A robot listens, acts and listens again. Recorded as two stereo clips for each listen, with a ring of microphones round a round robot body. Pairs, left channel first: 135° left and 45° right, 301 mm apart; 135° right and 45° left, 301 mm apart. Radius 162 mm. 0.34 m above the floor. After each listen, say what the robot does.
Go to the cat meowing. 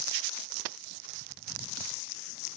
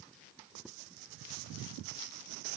Keep listening.
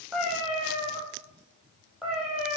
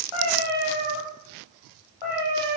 Turn 135° right.
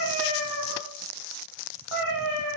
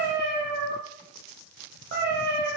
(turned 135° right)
Turn 15° right.
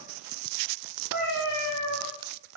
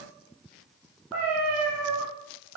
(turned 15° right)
Drive 1.0 m forward.
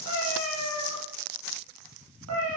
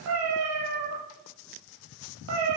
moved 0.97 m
Drive 1.0 m forward.
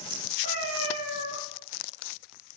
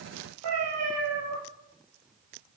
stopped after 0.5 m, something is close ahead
Something is in my way. I am facing the cat meowing but have not reached it.